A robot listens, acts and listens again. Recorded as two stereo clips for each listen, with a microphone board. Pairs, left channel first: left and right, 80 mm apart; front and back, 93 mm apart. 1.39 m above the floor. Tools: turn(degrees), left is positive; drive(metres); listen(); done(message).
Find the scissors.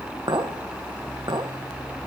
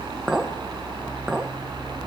listen()
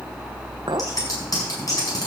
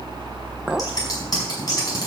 turn(degrees=50)
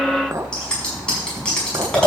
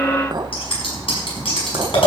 turn(degrees=10)
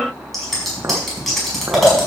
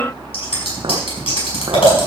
done("Facing the scissors, over 4 m away.")